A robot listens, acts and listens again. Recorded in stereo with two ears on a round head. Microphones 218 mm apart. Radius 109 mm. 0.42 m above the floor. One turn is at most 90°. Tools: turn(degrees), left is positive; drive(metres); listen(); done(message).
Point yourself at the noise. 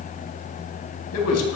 turn(degrees=65)
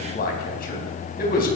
turn(degrees=40)
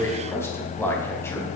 turn(degrees=10)
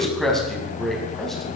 done("Facing the man speaking, 2 to 4 m away.")